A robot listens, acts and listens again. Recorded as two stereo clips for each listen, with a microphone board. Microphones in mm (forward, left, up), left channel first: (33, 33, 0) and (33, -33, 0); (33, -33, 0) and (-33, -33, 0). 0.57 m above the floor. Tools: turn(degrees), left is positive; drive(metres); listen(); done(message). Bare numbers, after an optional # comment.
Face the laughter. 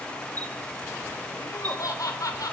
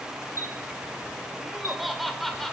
# The laughter: 85° left.
turn(85)
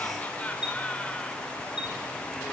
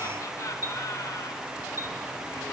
listen()
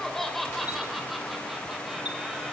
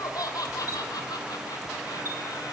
done("Facing the laughter.")